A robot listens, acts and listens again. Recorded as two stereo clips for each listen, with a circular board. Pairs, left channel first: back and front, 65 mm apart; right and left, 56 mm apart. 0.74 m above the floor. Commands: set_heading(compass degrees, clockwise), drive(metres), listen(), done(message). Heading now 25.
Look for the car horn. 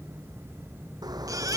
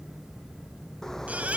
set_heading(35)
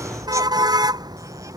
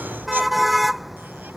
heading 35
done("Found it: a car horn, straight ahead.")